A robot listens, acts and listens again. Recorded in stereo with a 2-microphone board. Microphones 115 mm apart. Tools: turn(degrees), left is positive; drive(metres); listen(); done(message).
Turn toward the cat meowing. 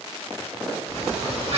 turn(degrees=-65)
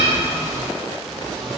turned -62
done("Found it: a cat meowing, straight ahead, under 1 m away.")